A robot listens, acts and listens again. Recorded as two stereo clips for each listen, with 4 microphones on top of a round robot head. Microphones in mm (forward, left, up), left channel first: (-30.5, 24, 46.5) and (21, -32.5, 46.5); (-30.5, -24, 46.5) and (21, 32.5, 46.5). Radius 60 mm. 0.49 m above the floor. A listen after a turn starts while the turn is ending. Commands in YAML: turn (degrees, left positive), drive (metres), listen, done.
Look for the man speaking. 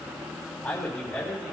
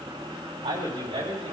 turn: 55
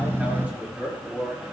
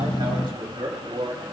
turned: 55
turn: 25
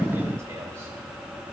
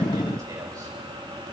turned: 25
listen: true
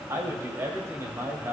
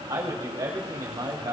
done: "Facing the man speaking."